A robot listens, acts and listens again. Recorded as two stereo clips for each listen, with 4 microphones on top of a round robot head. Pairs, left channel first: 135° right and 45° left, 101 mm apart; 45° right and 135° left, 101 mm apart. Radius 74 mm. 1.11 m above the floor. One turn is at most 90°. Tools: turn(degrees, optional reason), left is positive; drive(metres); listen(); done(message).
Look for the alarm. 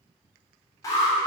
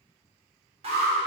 turn(degrees=90, reason="The alarm: 165° left.")
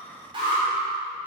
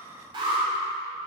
turn(degrees=85, reason="The alarm is now 85° left.")
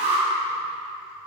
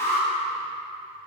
turn(degrees=25, reason="The alarm is now 25° left.")
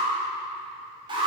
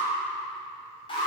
done("Found it: an alarm, straight ahead, 2 to 4 m away.")